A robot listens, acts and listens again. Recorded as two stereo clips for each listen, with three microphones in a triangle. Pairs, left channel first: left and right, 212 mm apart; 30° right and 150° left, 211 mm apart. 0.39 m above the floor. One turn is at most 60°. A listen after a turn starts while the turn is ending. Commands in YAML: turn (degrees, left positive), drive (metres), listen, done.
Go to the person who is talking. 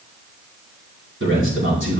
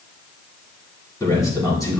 turn: -60
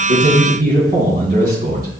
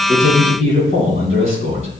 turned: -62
turn: -45
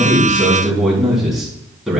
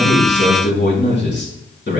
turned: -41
drive: 1.0
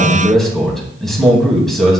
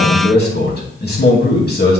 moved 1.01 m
drive: 1.0
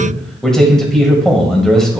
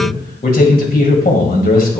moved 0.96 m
drive: 1.0
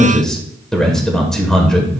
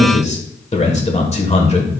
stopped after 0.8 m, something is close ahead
done: "Arrived at the man speaking, straight ahead."